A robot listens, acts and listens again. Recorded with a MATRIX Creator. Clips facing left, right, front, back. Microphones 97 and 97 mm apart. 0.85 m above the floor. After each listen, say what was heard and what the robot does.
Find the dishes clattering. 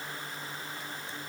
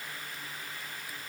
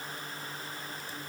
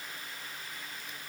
Keep listening.
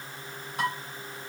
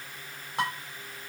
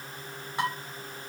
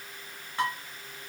The dishes clattering: 80° right. Turn 80° right.
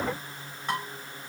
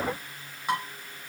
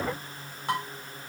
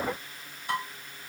The dishes clattering is now 10° right. Turn 10° right.
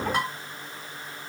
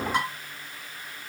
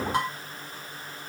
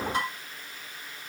Facing the dishes clattering.